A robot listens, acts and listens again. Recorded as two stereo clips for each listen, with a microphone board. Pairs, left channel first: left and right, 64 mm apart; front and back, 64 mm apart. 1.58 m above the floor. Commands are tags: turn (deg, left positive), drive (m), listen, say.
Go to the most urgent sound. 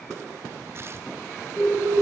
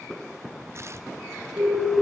<turn deg="160"/>
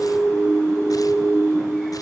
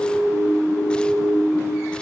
<turn deg="15"/>
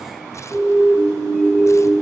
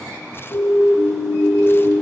<turn deg="-10"/>
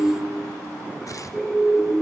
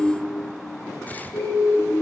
<drive m="1.0"/>
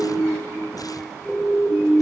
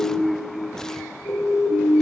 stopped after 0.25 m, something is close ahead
<say>Something is in my way. I am facing the siren but have not reached it.</say>